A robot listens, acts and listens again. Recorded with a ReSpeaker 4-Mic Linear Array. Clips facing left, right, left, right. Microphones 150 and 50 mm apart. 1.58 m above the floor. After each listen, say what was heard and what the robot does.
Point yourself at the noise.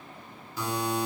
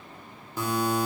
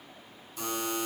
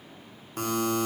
The buzzer: about 50° right or 130° right. Turn 50° right.
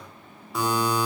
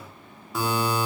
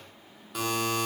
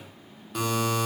Found it: a buzzer, straight ahead.